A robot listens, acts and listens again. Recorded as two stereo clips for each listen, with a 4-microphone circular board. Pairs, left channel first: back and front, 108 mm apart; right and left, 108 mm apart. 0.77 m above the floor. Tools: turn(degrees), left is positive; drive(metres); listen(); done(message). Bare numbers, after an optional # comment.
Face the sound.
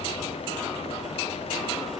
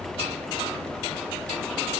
listen()
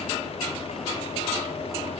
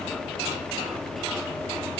listen()
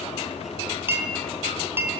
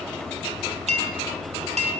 # The clink: 70° left.
turn(70)
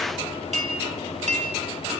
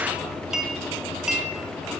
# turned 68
done("Found it: a clink, straight ahead.")